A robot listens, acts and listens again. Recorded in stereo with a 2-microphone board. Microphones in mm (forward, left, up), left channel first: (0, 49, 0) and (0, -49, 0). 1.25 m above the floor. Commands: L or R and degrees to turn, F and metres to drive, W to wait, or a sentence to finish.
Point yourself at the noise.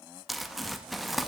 L30
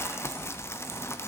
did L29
L150
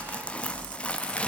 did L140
L10
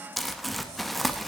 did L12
Facing the crumpling.